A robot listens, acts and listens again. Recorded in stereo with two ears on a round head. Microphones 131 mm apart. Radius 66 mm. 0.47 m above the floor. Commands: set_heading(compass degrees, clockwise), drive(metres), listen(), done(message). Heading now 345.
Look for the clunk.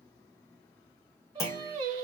set_heading(325)
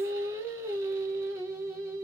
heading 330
listen()
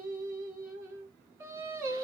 done("I heard a clunk, but can't make it out now. It was about 5° left or 145° left.")